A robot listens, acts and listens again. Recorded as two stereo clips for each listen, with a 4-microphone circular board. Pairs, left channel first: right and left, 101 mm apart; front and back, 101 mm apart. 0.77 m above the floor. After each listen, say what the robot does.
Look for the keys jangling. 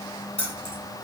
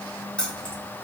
Turn 80° right.
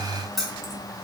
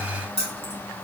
Found it: keys jangling, straight ahead, 1 to 2 m away.